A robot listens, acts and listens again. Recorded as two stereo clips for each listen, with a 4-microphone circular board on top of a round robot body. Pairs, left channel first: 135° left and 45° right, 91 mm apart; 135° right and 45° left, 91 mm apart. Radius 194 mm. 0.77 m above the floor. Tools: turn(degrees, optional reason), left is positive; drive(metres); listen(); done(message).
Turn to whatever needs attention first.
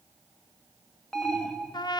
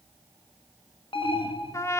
turn(degrees=-145, reason="The alarm: 145° right.")
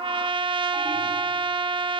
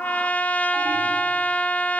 listen()
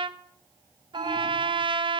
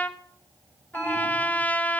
listen()
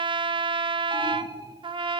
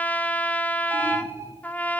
turn(degrees=-15, reason="The alarm is now 15° right.")
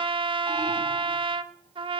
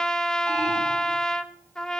listen()
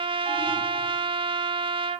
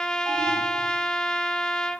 listen()
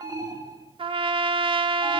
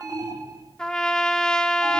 done("Found it: an alarm, straight ahead.")